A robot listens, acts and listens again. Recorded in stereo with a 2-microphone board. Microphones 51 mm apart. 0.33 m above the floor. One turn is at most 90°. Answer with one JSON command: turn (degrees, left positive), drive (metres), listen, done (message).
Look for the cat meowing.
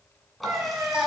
{"turn": -90}
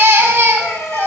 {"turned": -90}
{"turn": 50}
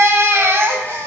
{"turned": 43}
{"listen": true}
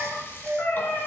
{"turn": 40}
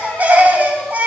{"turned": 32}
{"turn": 10}
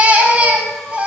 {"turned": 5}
{"listen": true}
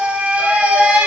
{"done": "Facing where the cat meowing came from. I can't hear it now."}